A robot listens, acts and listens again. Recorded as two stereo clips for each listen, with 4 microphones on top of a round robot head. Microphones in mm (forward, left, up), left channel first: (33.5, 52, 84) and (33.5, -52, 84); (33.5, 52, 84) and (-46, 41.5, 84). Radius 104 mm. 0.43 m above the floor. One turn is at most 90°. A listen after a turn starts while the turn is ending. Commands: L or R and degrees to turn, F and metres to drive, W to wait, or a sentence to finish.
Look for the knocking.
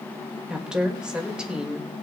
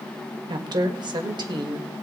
W
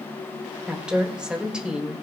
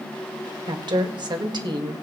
W
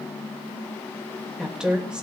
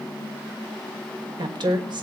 I can't make out knocking to turn to.